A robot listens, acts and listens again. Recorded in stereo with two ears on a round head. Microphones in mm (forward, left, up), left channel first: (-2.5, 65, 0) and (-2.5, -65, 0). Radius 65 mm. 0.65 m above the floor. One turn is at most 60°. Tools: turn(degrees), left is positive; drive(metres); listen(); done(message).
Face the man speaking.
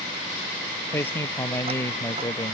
turn(degrees=15)
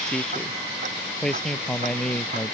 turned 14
turn(degrees=30)
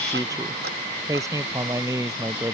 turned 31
turn(degrees=-20)
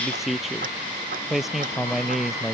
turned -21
done("Facing the man speaking.")